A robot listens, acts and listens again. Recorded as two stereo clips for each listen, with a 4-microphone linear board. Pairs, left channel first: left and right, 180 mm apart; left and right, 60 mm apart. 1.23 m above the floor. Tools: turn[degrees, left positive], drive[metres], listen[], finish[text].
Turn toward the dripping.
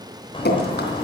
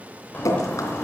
Thought: The dripping: about 65° left or 115° left.
Action: turn[65]
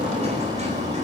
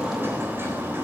Action: listen[]
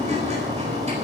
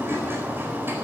Action: listen[]
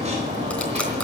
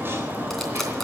Action: finish[I heard dripping, but can't make it out now. It was about straight ahead or 50° left.]